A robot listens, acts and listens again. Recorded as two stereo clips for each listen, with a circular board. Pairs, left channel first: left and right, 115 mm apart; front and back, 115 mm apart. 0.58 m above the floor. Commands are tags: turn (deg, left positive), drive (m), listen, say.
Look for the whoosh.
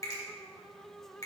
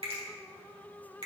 <listen/>
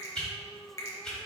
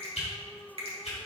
<say>Found it: a whoosh, straight ahead, 2 to 4 m away.</say>